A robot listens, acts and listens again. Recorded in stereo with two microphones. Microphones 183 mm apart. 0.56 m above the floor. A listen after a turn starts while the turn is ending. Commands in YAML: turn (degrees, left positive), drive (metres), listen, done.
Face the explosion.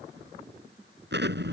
turn: -75
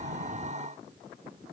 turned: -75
listen: true
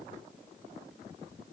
done: "I heard an explosion, but can't make it out now. It was about straight ahead or 30° right."